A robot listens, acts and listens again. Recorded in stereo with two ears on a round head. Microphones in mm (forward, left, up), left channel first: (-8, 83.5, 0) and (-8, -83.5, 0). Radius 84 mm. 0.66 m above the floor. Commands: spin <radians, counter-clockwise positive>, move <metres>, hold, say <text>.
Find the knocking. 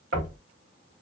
spin -0.79
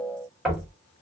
say Found it: knocking, straight ahead, 1 to 2 m away.